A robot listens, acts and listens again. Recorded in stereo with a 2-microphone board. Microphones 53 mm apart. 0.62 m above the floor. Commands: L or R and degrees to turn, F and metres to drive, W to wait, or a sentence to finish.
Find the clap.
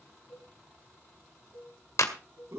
L70
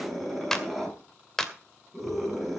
L10
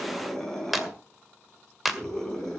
Found it: a clap, straight ahead, 1 to 2 m away.